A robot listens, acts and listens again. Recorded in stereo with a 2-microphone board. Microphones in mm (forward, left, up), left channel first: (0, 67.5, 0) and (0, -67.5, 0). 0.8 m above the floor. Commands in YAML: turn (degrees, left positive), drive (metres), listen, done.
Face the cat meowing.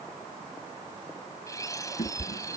turn: 75
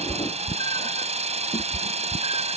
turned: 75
turn: 65
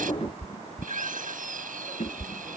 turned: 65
turn: 55
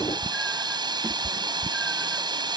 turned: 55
done: "Facing the cat meowing."